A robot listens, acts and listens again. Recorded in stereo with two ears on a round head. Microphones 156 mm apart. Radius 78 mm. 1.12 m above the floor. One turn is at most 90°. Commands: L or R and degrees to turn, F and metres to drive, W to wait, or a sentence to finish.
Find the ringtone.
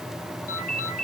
L45
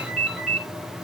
Found it: a ringtone, straight ahead, over 4 m away.